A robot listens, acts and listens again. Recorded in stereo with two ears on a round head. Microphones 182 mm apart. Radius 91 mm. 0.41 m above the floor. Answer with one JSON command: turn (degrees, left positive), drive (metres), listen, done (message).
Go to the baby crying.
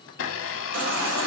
{"turn": -65}
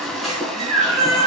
{"drive": 1.0}
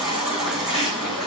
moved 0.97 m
{"drive": 1.0}
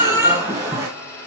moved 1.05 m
{"turn": -15}
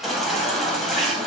{"drive": 1.0}
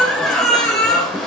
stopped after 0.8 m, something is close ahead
{"done": "I am next to the baby crying."}